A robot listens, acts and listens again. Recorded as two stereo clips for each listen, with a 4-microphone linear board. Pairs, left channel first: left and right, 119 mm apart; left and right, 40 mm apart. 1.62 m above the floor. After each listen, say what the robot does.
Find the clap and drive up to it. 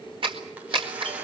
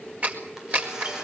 Turn 45° right.
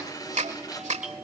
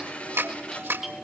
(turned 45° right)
Turn 90° right.
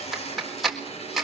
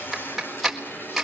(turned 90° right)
Drive 1.0 m forward.
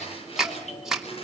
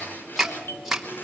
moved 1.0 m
Drive 1.0 m forward.
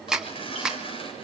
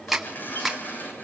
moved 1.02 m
Drive 1.0 m forward.
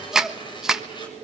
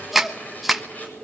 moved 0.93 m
Drive 1.0 m forward.
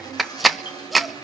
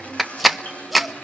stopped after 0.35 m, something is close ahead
Arrived at the clap, straight ahead.